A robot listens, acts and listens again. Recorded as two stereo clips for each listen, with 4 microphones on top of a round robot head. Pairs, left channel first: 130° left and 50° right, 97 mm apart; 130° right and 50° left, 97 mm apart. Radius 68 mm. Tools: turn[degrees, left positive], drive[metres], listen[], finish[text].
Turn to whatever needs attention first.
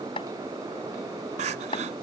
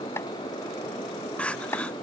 Thought: The crying: 50° right.
Action: turn[-50]
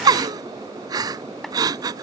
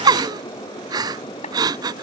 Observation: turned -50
Action: finish[Found it: crying, straight ahead.]